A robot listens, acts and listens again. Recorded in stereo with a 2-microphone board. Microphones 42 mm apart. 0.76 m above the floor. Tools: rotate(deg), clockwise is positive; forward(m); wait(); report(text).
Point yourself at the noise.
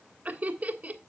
rotate(35)
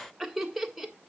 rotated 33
report("Facing the laughter, 1 to 2 m away.")